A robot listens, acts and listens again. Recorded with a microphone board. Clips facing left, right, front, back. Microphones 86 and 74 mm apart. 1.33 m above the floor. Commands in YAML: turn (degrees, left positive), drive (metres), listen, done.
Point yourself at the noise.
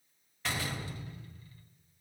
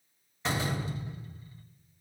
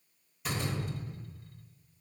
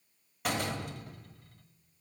turn: -160
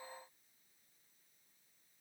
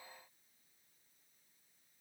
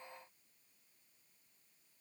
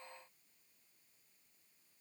done: "I heard a door slam from this way, but can't make it out now."